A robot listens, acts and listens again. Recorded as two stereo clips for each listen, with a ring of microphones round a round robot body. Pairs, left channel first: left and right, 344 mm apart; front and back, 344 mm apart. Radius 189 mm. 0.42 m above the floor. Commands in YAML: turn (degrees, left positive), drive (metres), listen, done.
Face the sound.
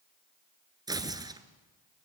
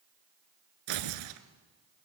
turn: -170
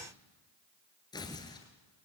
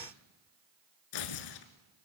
turn: 10
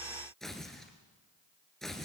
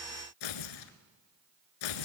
done: "Found it: tearing paper, straight ahead."